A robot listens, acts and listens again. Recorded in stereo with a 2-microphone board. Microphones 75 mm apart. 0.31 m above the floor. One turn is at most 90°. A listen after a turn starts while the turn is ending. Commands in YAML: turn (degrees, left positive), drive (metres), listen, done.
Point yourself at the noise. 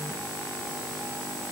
listen: true
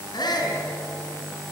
turn: 65
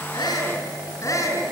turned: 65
turn: 45
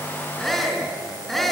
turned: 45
done: "Facing the shout."